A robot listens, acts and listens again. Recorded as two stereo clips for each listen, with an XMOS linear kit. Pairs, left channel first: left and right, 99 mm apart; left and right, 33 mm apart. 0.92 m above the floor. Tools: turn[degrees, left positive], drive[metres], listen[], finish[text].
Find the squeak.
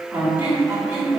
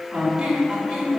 Thought: The squeak: about 20° right or 160° right.
Action: turn[-20]
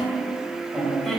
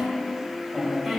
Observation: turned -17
Action: finish[Found it: a squeak, straight ahead.]